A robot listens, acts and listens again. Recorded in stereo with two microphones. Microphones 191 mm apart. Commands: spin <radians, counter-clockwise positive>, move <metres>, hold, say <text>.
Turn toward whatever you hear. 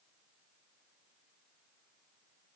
hold
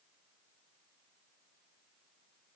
hold
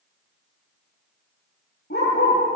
spin 1.13
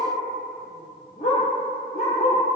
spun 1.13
spin 0.79
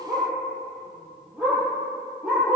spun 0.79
say Found it: a dog barking, straight ahead.